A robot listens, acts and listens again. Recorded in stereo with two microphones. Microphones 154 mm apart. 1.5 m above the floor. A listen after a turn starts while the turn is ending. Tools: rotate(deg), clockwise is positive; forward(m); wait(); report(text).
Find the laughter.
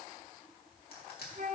wait()
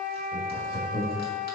rotate(-35)
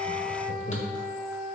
rotate(-95)
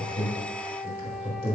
rotate(10)
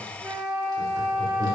wait()
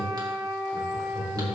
report("Facing the laughter.")